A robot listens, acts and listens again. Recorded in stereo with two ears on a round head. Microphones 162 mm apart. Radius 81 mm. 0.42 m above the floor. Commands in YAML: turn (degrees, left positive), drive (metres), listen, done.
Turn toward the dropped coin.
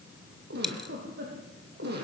turn: 30
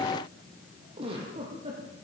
listen: true
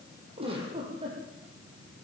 done: "I heard a dropped coin, but can't make it out now. It was about 30° right or 150° left."